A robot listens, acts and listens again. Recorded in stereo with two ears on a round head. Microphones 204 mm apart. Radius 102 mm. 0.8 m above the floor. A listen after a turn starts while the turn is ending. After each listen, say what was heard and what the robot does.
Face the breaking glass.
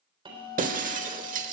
The breaking glass: about 35° right or 145° right. Turn 35° right.
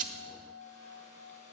Keep listening.
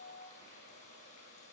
I heard breaking glass, but can't make it out now. It was about straight ahead or 110° right.